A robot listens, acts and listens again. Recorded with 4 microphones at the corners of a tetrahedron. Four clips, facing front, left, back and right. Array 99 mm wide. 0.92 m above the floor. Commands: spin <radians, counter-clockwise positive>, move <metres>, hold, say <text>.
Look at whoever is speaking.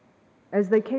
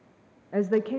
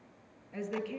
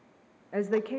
say Facing the woman speaking.